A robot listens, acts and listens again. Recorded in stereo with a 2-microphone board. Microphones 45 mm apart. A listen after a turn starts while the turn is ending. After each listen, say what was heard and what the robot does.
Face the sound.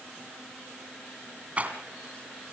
The rattle: about 30° right or 150° right. Turn 30° right.
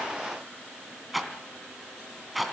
Facing the rattle.